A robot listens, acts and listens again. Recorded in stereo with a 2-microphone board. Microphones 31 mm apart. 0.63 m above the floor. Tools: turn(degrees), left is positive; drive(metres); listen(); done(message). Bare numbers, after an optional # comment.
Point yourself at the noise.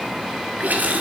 # The running tap: about 70° right or 110° right.
turn(-70)
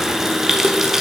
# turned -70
# So it is at 15° right.
turn(-15)
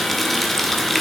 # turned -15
done("Facing the running tap.")